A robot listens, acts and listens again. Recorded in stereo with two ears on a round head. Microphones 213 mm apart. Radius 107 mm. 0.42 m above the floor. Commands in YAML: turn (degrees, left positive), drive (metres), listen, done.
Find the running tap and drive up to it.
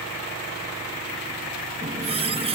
turn: -25
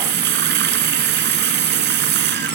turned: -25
turn: -130
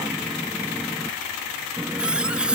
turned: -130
drive: 1.0
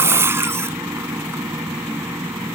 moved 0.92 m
turn: -10
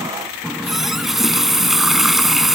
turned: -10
drive: 1.0
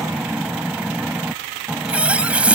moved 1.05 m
drive: 1.0
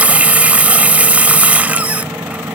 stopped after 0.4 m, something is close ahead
done: "Arrived at the running tap, straight ahead."